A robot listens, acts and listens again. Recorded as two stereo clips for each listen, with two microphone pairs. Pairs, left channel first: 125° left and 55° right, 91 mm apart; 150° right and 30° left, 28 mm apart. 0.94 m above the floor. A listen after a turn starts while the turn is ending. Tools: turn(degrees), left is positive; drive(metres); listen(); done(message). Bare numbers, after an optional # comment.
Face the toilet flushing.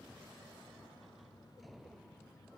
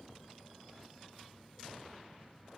listen()
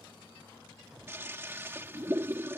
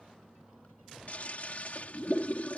# The toilet flushing: 120° right.
turn(-120)
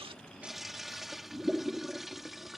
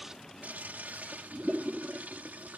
# The toilet flushing is now 35° left.
turn(35)
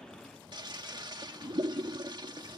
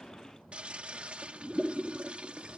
# The toilet flushing is now 15° right.
turn(-15)
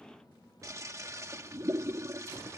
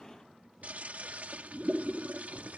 done("Found it: a toilet flushing, straight ahead.")